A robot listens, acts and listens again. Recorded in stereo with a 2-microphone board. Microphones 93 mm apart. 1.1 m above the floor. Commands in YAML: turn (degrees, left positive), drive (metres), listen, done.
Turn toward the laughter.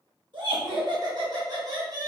turn: -40
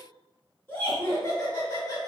turn: 35
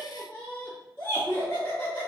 turn: 25
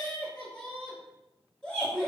done: "Facing the laughter."